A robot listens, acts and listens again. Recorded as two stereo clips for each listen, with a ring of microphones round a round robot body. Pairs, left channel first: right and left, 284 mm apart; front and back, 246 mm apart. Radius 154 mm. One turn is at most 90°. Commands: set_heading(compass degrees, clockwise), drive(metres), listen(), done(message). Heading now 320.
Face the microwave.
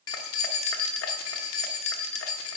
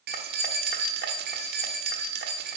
listen()
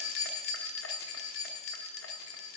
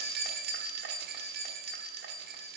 listen()
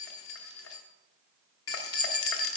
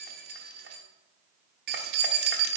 done("I can't make out a microwave to turn to.")